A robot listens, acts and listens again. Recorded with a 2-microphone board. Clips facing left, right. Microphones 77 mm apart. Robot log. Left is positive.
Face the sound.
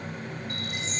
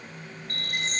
note: The chime: about 50° right or 130° right.
cmd yaw -50
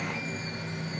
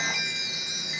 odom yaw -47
note: So it is at 80° right.
cmd yaw -80
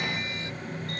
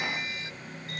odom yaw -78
end: Facing the chime.